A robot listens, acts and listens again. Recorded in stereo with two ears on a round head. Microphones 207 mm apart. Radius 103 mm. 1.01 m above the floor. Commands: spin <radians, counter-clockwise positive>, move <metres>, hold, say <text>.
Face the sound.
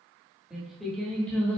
spin 0.52
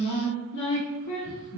spin 2.09
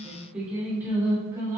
spin -0.26
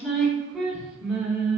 say Facing the singing, 2 to 4 m away.